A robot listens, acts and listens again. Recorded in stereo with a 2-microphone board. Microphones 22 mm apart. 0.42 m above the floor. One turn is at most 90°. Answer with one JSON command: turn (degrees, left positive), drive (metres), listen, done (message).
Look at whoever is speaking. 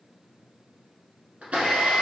{"listen": true}
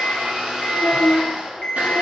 {"turn": -40}
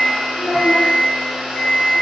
{"turn": -90}
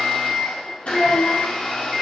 {"turn": 10}
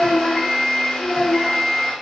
{"done": "Facing the child speaking, under 1 m away."}